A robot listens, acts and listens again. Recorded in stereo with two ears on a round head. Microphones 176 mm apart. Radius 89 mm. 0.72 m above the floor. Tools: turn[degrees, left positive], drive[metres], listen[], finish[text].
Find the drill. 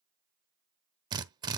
Thought: The drill: about 25° right or 155° right.
Action: turn[-25]
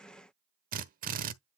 Thought: So it is at 130° right.
Action: turn[-130]
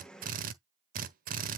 Thought: The drill is now 45° right.
Action: turn[-45]
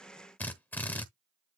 Thought: The drill is now 10° left.
Action: turn[10]
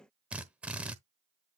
Action: finish[Found it: a drill, straight ahead.]